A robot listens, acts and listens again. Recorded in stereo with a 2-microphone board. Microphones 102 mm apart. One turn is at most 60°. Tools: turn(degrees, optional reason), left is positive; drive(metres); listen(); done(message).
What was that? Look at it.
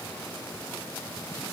listen()
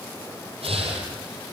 turn(degrees=-60)
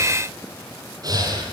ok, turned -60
turn(degrees=-40, reason="So it is at 40° right.")
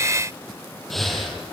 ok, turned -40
done("Facing the breathing, over 4 m away.")